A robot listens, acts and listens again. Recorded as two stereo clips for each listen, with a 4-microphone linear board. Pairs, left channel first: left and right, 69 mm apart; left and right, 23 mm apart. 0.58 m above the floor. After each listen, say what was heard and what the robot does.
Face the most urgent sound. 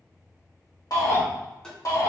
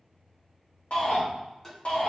The shout: about 60° left or 120° left. Turn 60° left.
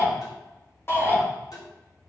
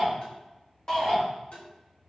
So it is at 40° left. Turn 40° left.
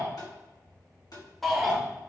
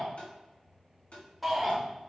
Facing the shout, 1 to 2 m away.